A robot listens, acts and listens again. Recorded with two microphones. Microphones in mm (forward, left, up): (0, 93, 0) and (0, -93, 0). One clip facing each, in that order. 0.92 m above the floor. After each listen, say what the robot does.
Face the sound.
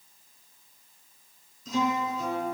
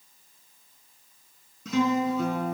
Turn 75° right.
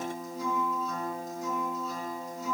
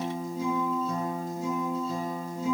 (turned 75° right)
Turn 30° right.
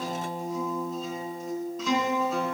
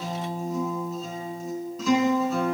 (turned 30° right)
Found it: a guitar, straight ahead.